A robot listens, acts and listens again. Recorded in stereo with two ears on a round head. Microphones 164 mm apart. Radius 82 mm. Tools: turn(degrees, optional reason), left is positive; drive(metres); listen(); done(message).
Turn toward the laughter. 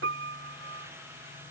listen()
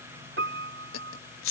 turn(degrees=90)
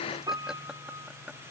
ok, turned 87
listen()
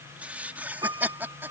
turn(degrees=-10, reason="The laughter is now 10° right.")
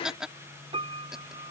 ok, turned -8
done("Found it: laughter, straight ahead.")